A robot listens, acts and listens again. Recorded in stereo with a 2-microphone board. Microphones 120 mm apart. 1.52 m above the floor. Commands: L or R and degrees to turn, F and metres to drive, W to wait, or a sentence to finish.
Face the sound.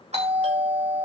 R60
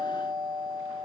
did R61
R60
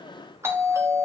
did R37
R20
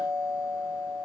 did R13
R10
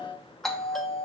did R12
Found it: a doorbell, straight ahead.